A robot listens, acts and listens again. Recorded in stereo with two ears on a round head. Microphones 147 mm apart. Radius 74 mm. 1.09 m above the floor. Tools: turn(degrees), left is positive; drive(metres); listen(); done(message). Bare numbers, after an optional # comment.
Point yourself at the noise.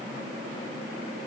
listen()
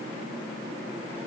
listen()
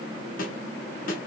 # The snare drum: about 55° left or 125° left.
turn(55)
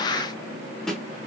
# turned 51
done("Found it: a snare drum, straight ahead, 1 to 2 m away.")